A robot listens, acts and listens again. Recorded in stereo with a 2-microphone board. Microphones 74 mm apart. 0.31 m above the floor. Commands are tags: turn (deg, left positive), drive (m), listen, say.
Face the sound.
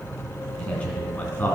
<turn deg="25"/>
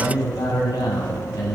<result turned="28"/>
<turn deg="115"/>
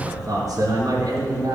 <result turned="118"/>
<turn deg="-55"/>
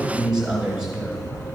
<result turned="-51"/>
<turn deg="-10"/>
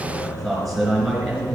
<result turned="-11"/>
<say>Facing the man speaking, 2 to 4 m away.</say>